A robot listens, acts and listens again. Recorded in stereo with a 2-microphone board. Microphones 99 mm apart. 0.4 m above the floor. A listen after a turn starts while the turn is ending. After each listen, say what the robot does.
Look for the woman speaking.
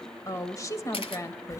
Turn 35° left.
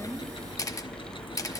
Keep listening.
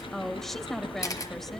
Found it: a woman speaking, straight ahead.